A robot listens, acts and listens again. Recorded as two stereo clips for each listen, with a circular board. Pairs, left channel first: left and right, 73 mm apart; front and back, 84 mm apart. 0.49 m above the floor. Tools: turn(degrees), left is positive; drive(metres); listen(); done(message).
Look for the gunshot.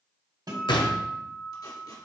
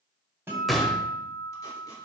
turn(degrees=90)
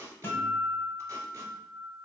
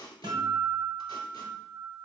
done("Facing where the gunshot came from. I can't hear it now.")